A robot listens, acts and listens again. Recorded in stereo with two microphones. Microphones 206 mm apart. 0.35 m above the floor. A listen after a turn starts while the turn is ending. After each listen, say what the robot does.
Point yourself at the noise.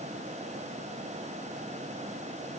Keep listening.
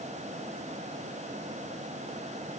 Keep listening.
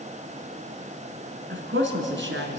Turn 65° right.
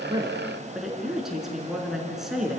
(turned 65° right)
Facing the woman speaking.